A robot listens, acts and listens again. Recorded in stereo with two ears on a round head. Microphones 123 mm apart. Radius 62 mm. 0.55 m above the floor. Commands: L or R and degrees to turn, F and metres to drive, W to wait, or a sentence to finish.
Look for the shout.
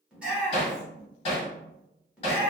R30
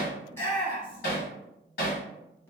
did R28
L15
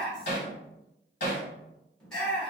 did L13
Facing the shout.